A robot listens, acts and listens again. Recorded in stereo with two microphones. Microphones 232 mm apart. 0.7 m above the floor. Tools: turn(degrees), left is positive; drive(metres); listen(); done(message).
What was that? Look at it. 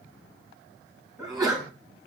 turn(degrees=-15)
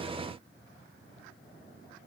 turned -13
listen()
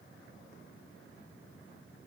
done("I heard a sneeze, but can't make it out now. It was about 5° right or 150° right.")